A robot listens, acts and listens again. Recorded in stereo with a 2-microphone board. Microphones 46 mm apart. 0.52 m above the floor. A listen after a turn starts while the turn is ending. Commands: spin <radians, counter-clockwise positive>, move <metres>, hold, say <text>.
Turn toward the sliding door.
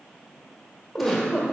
hold
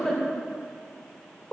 hold
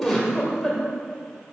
say I can't make out a sliding door to turn to.